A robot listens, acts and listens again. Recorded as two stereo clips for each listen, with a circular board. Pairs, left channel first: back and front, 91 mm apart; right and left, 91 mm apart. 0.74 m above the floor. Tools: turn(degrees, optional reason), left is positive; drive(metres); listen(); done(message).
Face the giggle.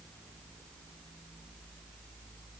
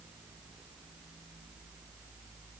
listen()
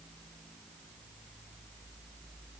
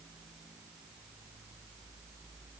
listen()
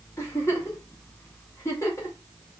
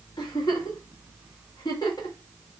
turn(degrees=-125, reason="The giggle: 125° right.")
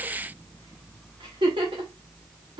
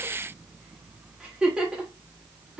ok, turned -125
turn(degrees=10, reason="The giggle is now 10° left.")
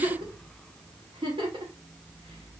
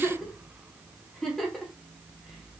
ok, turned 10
done("Found it: a giggle, straight ahead.")